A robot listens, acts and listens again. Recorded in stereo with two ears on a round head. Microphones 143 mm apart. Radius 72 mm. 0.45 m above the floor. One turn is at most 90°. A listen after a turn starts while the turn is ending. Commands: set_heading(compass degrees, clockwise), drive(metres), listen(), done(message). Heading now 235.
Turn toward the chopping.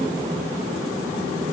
listen()
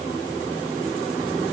listen()
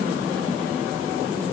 done("I can't make out chopping to turn to.")